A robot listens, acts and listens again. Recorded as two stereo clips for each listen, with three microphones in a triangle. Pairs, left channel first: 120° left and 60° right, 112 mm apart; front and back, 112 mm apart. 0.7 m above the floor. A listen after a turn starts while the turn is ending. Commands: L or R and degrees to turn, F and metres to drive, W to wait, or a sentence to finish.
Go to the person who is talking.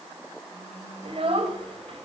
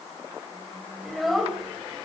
R90
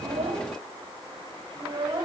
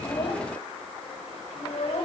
R15
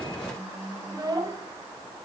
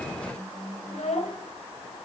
F1.0
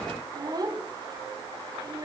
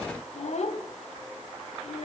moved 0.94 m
F1.0
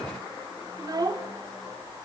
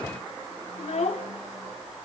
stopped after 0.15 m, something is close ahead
I am next to the child speaking.